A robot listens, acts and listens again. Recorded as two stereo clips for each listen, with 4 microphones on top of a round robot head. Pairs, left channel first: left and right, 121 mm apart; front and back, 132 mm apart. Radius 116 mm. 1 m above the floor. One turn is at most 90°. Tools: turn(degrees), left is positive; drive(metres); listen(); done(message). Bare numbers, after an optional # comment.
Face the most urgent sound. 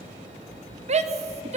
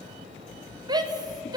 # The shout: 120° right.
turn(-90)
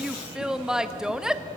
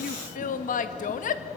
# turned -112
done("Facing the shout, 1 to 2 m away.")